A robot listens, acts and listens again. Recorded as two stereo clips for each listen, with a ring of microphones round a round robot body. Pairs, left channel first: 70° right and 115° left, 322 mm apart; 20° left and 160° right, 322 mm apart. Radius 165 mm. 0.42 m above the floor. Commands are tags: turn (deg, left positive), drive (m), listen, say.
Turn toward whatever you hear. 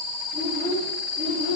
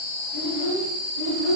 <turn deg="-175"/>
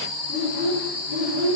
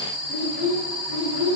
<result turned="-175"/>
<turn deg="35"/>
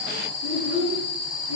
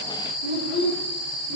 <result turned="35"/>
<turn deg="10"/>
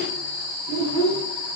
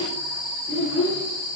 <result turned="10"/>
<say>Facing the child speaking.</say>